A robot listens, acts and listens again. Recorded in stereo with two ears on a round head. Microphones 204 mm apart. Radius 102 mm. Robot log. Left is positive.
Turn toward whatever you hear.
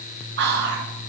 note: The whispering: about 45° right or 135° right.
cmd yaw -45
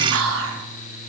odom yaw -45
note: So it is at 80° right.
cmd yaw -80
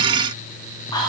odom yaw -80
note: The whispering is now 20° left.
cmd yaw +20
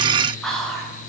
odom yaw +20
end: Found it: whispering, straight ahead.